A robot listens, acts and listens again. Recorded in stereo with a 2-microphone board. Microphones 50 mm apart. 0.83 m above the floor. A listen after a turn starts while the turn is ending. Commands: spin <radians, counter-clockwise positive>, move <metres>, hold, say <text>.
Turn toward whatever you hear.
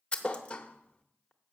spin 0.35
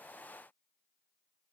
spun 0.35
hold
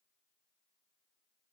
say I heard a thud, but can't make it out now. It was about straight ahead or 140° left.